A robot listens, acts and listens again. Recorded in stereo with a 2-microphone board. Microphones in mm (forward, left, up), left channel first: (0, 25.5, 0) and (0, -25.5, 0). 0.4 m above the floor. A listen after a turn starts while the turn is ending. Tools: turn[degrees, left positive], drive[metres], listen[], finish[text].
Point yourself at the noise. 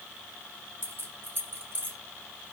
Thought: The keys jangling: about 40° right or 140° right.
Action: turn[-40]
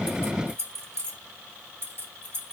Thought: So it is at 125° right.
Action: turn[-125]
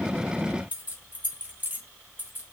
Thought: The keys jangling is now 35° right.
Action: turn[-35]
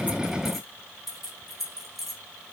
Action: finish[Found it: keys jangling, straight ahead.]